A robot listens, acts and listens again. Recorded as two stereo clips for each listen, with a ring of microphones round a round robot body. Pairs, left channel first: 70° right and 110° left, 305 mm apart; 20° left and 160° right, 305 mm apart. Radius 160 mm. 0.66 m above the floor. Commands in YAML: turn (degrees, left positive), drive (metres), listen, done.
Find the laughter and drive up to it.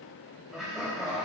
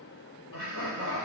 turn: 25
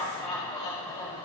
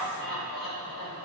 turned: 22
drive: 1.0
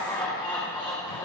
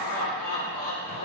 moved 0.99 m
drive: 1.0
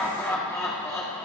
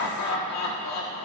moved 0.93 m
turn: 10
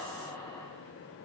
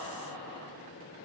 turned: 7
drive: 1.0
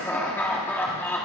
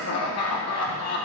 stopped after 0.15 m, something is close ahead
turn: 15
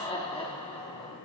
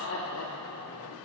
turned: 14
done: "Arrived at the laughter, straight ahead."